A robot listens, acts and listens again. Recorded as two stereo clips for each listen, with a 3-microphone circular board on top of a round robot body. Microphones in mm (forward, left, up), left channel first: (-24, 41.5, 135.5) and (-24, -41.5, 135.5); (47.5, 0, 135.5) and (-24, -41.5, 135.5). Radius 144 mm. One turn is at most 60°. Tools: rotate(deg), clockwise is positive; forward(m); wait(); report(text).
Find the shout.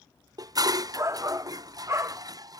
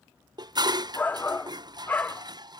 rotate(35)
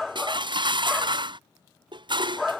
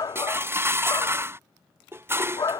report("Facing the shout.")